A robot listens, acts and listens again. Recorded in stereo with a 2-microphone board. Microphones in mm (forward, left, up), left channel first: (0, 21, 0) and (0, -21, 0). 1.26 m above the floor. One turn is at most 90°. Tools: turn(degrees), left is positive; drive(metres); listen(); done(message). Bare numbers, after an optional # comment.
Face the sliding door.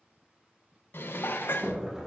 turn(-30)
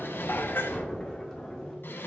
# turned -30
# So it is at 25° left.
turn(25)
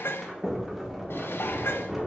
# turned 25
done("Facing the sliding door.")